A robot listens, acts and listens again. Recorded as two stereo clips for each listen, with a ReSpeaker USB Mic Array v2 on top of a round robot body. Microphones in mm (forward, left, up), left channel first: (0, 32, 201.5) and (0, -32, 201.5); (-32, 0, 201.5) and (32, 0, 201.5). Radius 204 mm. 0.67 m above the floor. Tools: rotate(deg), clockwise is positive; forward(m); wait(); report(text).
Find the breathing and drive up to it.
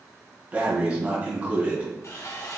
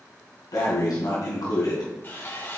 rotate(160)
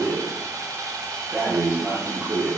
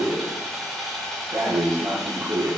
rotate(15)
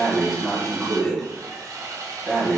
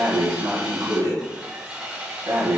forward(1.0)
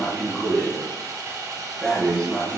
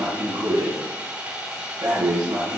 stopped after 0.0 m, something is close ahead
report("Something is in my way. I am facing the breathing but have not reached it.")